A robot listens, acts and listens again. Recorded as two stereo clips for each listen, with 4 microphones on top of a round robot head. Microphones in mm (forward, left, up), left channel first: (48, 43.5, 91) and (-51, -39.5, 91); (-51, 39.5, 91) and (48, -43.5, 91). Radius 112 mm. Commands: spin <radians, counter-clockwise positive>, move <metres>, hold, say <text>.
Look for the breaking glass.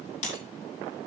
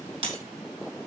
say Found it: breaking glass, straight ahead, over 4 m away.